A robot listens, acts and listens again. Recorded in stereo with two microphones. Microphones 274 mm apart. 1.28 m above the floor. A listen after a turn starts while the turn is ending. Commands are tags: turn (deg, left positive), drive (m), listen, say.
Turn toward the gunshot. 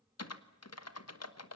<listen/>
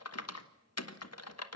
<listen/>
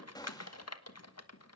<turn deg="30"/>
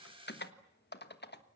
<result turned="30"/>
<listen/>
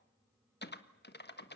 <say>I heard a gunshot, but can't make it out now. It was about 15° right or 135° left.</say>